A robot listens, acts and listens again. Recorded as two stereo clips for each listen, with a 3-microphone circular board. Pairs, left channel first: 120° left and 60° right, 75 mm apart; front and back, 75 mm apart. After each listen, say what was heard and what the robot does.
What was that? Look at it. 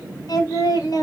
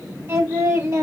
The singing: 140° left. Turn 140° left.
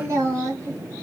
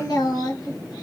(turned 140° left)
The singing is now 10° right. Turn 10° right.
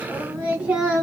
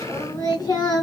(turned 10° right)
The singing is now 10° left. Turn 10° left.
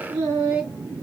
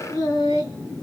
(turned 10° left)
The singing is now 10° left. Turn 10° left.
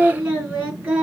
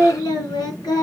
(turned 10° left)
The singing is now 10° left. Turn 10° left.
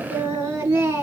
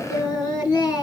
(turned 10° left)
Found it: singing, straight ahead, 2 to 4 m away.